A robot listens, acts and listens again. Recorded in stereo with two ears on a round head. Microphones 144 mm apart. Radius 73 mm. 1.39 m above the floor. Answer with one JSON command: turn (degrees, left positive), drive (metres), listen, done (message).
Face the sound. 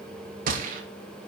{"turn": -60}
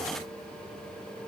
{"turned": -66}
{"listen": true}
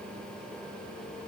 {"done": "I heard a gunshot, but can't make it out now. It was about 10° left or 55° right."}